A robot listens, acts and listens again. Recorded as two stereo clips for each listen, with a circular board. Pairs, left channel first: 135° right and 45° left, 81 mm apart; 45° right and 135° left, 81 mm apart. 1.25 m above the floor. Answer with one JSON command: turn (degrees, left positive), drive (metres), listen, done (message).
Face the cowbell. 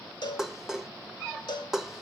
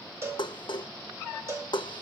{"turn": -170}
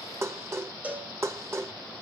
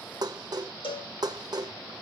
{"turn": -25}
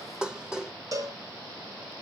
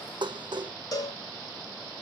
{"done": "Facing the cowbell, 2 to 4 m away."}